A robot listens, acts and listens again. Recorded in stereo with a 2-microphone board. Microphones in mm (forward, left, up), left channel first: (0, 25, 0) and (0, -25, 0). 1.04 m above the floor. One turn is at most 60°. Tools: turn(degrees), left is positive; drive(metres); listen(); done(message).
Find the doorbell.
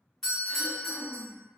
turn(degrees=30)
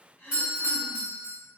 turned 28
turn(degrees=-25)
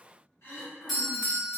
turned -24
done("Facing the doorbell.")